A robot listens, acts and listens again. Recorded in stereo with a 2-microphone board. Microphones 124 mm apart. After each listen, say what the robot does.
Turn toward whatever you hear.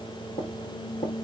Turn 40° left.
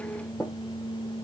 Found it: tapping, straight ahead, over 4 m away.